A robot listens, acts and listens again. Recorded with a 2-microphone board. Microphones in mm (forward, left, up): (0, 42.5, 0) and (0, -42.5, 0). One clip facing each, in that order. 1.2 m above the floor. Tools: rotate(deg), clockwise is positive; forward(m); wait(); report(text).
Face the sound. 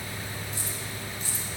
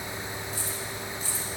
rotate(-70)
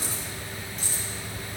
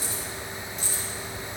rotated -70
rotate(-40)
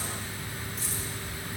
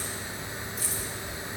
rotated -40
report("Found it: keys jangling, straight ahead.")